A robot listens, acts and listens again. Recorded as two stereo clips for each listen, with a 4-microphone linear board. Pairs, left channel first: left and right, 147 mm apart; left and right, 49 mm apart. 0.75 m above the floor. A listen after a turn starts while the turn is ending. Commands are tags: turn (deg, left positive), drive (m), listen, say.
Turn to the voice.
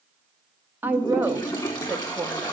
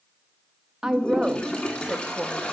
<turn deg="-30"/>
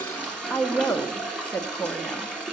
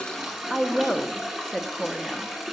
<turn deg="15"/>
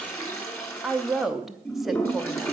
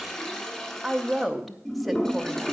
<say>Facing the woman speaking, under 1 m away.</say>